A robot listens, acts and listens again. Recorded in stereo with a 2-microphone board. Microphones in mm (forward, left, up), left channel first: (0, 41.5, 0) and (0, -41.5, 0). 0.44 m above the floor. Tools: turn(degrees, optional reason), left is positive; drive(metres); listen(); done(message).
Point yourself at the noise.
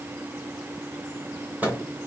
turn(degrees=-20, reason="The microwave: about 20° right or 160° right.")
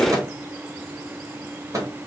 turn(degrees=-135, reason="So it is at 135° right.")
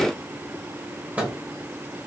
turn(degrees=-20, reason="The microwave is now 20° right.")
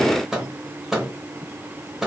done("Facing the microwave.")